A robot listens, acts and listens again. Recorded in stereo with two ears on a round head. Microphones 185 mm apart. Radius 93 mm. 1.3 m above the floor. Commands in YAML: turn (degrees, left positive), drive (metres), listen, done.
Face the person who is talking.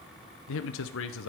turn: 70
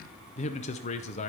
turn: 35
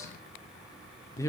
turn: 15
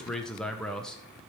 done: "Facing the man speaking, under 1 m away."